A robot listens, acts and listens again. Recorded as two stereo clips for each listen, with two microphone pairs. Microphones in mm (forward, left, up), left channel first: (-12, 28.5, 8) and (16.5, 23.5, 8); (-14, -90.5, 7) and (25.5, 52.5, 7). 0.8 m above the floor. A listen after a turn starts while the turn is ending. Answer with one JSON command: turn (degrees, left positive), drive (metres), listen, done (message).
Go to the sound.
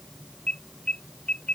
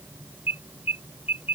{"turn": -150}
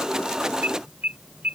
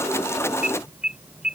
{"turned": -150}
{"turn": -10}
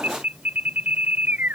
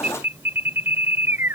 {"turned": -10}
{"drive": 1.0}
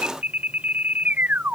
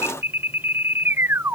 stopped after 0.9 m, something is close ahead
{"done": "Something is in my way. I am facing the alarm but have not reached it."}